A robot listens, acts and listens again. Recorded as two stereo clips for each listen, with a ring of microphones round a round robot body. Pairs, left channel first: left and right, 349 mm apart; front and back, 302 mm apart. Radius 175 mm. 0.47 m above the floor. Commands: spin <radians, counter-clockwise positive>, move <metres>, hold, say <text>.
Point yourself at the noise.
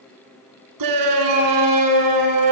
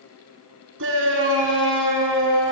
spin -2.09
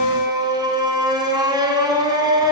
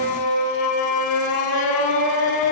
spin -0.17
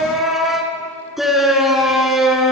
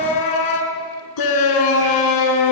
say Facing the shout.